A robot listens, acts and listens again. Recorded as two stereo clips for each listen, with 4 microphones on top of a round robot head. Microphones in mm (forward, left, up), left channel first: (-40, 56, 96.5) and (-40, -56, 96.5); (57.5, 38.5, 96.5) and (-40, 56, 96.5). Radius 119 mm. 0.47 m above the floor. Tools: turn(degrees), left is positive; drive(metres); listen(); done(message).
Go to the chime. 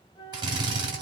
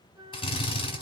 listen()
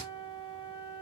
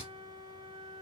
listen()
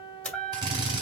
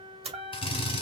turn(degrees=170)
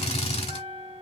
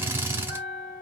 turn(degrees=-40)
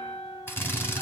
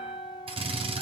turn(degrees=10)
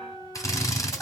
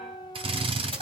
listen()
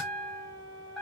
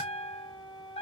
drive(metres=1.0)
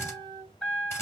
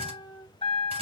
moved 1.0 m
drive(metres=1.0)
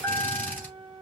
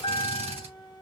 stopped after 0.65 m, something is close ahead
turn(degrees=10)
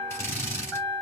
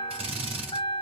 done("I am next to the chime.")